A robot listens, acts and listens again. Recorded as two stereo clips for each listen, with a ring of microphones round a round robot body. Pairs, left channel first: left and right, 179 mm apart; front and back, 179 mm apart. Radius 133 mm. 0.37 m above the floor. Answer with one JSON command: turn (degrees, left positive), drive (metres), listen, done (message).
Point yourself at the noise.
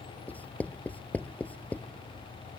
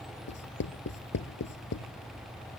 {"turn": 10}
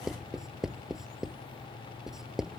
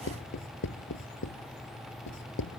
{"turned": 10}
{"done": "Found it: writing, straight ahead."}